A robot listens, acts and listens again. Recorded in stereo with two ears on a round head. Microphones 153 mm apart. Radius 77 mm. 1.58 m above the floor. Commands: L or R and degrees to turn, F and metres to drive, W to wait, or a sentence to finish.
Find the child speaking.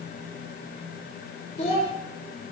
L40
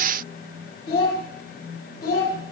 L115
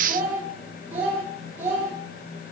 R15
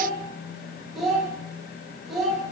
Facing the child speaking.